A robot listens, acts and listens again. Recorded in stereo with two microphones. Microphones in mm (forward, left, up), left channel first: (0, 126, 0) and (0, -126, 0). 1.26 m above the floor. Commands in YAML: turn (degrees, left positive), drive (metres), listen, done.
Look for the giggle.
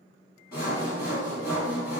listen: true
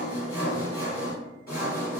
listen: true
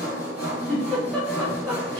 turn: 30
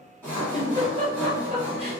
turn: -25
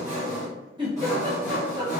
turn: -20
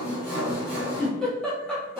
done: "Facing the giggle."